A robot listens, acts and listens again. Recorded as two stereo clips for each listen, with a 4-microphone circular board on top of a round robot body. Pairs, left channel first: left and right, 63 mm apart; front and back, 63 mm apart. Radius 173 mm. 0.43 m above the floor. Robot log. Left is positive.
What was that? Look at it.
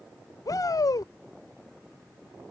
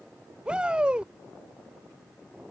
note: The shout: 105° left.
cmd yaw +105
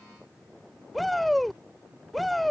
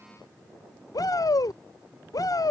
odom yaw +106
end: Found it: a shout, straight ahead.